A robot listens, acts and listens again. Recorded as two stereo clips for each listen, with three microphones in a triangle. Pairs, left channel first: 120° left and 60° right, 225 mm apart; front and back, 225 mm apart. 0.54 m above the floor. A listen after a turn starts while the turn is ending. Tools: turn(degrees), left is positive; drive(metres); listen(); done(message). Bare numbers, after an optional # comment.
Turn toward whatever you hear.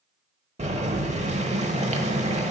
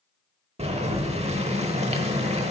# The boiling: 115° right.
turn(-115)
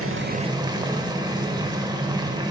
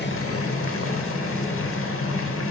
# The boiling is now 15° left.
turn(15)
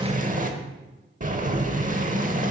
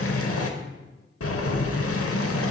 done("Facing the boiling, under 1 m away.")